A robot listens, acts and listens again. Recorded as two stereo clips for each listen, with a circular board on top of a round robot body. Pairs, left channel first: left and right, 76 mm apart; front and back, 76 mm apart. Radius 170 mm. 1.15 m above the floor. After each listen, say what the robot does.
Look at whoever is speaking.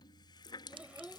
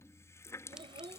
Turn 165° right.
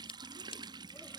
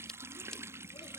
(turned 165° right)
Keep listening.
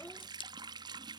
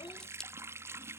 Keep listening.
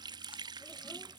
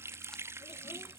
Facing where the child speaking came from. I can't hear it now.